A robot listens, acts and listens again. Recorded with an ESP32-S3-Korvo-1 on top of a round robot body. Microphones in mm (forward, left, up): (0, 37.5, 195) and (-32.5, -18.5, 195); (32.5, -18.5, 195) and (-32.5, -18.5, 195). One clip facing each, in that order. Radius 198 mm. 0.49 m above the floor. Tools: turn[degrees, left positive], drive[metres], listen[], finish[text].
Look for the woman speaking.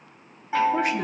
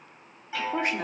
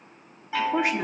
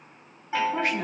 Thought: The woman speaking: 70° right.
Action: turn[-70]
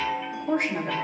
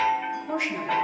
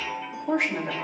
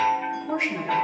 Thought: The woman speaking is now 10° left.
Action: turn[10]
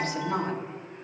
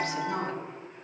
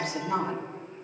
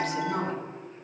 Action: finish[Facing the woman speaking, 2 to 4 m away.]